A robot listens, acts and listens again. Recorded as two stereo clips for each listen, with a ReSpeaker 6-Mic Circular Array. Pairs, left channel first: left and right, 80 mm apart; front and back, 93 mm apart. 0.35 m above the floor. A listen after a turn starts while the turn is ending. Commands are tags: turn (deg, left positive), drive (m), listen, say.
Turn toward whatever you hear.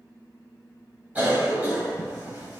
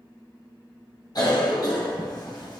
<turn deg="-25"/>
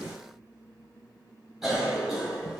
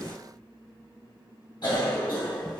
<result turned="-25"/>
<say>Found it: a cough, straight ahead.</say>